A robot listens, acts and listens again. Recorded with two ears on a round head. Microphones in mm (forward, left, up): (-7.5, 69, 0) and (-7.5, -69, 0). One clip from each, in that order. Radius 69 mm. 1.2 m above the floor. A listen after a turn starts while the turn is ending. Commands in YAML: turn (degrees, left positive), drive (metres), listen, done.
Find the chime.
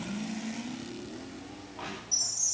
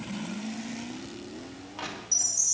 turn: -25
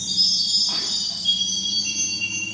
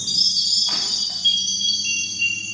turn: -130
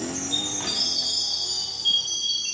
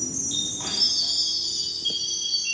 turn: 10
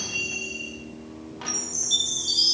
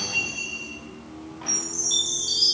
done: "Found it: a chime, straight ahead, over 4 m away."